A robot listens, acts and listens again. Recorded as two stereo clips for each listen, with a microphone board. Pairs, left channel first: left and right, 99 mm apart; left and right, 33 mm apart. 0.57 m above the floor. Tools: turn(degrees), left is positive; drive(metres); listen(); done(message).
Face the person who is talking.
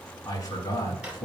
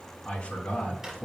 turn(degrees=40)
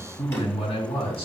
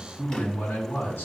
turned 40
turn(degrees=105)
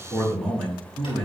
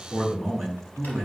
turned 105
done("Found it: a man speaking, straight ahead.")